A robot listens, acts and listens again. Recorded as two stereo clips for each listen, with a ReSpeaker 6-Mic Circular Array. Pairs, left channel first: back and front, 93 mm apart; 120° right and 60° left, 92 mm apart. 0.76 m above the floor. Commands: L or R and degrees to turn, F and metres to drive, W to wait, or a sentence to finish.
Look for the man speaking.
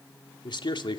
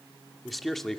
L155
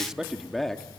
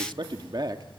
L95
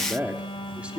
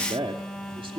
L80
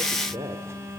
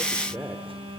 Found it: a man speaking, straight ahead, 2 to 4 m away.